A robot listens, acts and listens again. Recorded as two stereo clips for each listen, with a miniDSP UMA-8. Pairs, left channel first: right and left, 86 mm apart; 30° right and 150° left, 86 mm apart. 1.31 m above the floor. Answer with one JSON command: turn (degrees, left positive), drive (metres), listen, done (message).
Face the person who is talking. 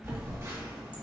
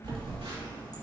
{"listen": true}
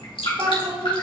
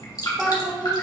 {"turn": 75}
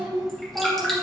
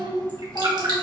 {"done": "Found it: a child speaking, straight ahead, 2 to 4 m away."}